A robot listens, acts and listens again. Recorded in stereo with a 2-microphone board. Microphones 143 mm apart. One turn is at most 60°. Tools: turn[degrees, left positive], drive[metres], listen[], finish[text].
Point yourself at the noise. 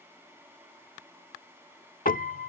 Action: turn[60]
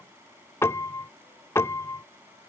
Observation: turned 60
Thought: So it is at 20° left.
Action: turn[20]
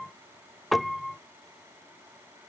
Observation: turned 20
Action: finish[Facing the piano.]